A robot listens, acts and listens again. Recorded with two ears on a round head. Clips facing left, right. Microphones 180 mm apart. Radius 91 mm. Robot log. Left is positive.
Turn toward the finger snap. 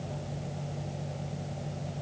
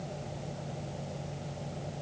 cmd idle
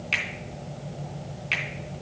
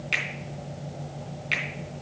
cmd yaw -30
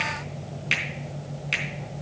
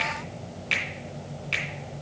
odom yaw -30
note: So it is at 20° left.
cmd yaw +20
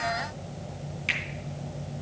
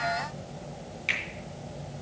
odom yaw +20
end: Found it: a finger snap, straight ahead, 2 to 4 m away.